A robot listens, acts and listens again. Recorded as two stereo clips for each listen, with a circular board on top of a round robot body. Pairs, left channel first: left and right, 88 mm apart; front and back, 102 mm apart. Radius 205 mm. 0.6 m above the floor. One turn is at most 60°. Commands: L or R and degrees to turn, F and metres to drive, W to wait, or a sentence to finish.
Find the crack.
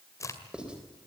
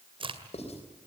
L60
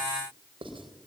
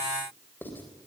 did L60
L60
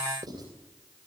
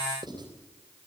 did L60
L25
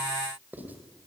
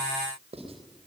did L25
Facing where the crack came from. I can't hear it now.